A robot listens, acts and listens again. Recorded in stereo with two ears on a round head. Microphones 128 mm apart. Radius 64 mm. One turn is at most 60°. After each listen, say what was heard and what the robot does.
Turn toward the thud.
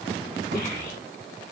Turn 60° right.
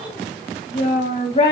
Nothing new. It was at 30° right. Turn 30° right.
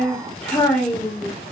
Facing where the thud came from. I can't hear it now.